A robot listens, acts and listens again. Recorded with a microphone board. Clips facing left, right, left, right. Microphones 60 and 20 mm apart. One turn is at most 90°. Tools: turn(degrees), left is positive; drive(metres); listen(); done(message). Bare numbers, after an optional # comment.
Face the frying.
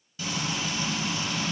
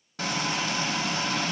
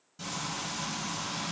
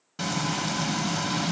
# The frying: about 70° right or 110° right.
turn(-70)
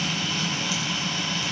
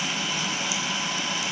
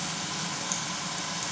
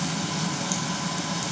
# So it is at 15° right.
turn(-15)
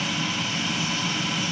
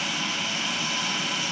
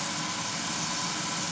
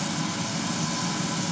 done("Facing the frying, under 1 m away.")